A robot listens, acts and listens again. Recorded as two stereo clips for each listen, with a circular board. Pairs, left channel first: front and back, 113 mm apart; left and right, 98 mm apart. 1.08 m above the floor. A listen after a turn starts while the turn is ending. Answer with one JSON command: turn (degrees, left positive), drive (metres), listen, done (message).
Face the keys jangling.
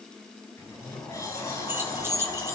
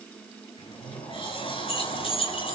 {"turn": 115}
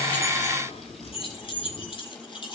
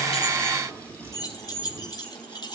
{"turn": 45}
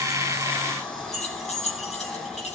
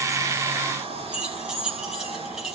{"done": "Facing the keys jangling, over 4 m away."}